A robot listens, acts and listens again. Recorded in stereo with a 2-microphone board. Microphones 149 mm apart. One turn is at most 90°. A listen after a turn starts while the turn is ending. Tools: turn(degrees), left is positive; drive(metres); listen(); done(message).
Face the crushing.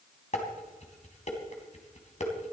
listen()
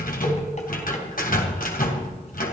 listen()
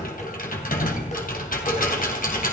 done("I can't make out crushing to turn to.")